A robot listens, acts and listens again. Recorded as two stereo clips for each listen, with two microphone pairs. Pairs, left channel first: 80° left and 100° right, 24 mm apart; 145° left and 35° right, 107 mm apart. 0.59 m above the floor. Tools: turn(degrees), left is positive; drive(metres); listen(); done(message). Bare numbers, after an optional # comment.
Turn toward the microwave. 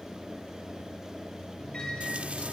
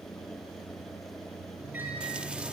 # The microwave: 35° left.
turn(35)
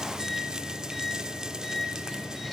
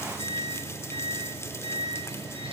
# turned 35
done("Found it: a microwave, straight ahead.")